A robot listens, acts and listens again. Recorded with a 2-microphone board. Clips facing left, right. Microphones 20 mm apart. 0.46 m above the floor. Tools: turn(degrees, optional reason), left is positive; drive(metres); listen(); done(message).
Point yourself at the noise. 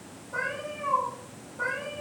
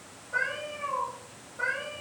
turn(degrees=-30, reason="The cat meowing: about 30° right or 150° right.")
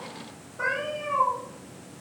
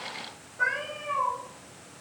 done("Found it: a cat meowing, straight ahead, 2 to 4 m away.")